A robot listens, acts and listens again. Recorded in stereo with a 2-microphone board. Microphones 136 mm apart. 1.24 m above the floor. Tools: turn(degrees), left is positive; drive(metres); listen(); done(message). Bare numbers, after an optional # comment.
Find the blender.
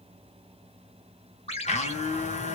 # The blender: about 55° left or 125° left.
turn(55)
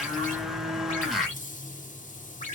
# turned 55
done("Facing the blender, 1 to 2 m away.")